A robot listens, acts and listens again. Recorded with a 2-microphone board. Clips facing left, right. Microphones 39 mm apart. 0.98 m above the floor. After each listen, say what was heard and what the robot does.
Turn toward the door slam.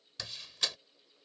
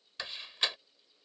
The door slam: about 30° right or 150° right. Turn 30° right.
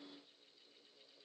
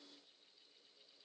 Keep listening.
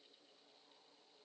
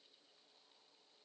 I heard a door slam, but can't make it out now. It was about straight ahead or 120° right.